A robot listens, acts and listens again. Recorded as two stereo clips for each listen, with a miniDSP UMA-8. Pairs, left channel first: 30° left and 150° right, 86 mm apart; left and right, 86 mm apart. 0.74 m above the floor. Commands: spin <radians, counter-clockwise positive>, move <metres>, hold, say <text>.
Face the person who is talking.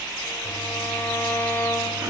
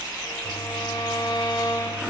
hold
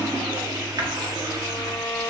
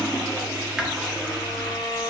hold
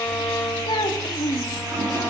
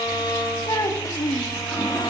spin 0.79
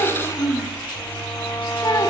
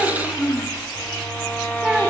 spin -0.17
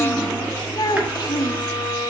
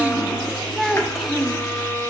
say Found it: a child speaking, straight ahead, under 1 m away.